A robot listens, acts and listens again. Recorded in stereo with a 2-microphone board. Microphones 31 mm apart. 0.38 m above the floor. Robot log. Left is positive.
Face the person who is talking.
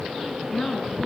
note: The woman speaking: about 25° left or 155° left.
cmd yaw +25
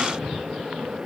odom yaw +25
cmd idle
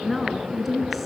end: Found it: a woman speaking, straight ahead, over 4 m away.